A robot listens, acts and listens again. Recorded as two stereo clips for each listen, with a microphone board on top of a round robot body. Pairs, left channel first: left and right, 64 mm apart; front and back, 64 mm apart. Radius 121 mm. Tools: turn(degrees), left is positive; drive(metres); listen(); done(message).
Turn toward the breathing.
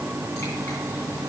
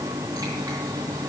listen()
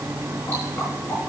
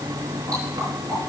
listen()
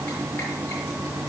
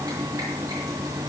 done("I can't make out breathing, only dripping.")